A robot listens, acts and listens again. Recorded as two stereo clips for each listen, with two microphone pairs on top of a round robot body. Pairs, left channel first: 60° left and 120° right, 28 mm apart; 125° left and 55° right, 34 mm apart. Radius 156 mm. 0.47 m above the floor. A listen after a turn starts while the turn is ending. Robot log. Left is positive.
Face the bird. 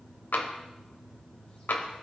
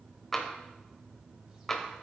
cmd idle
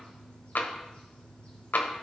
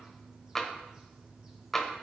cmd idle
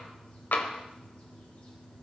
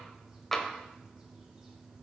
end: I can't make out a bird, only tapping.